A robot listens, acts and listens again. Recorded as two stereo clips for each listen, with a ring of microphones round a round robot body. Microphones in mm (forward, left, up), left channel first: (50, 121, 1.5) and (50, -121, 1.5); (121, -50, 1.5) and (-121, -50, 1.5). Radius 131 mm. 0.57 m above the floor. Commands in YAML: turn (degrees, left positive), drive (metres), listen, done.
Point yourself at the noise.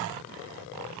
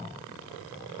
listen: true
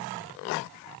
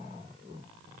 listen: true
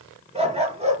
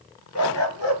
turn: -25
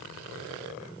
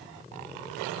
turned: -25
listen: true
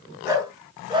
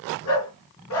turn: -20
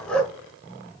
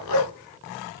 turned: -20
done: "Found it: a dog barking, straight ahead."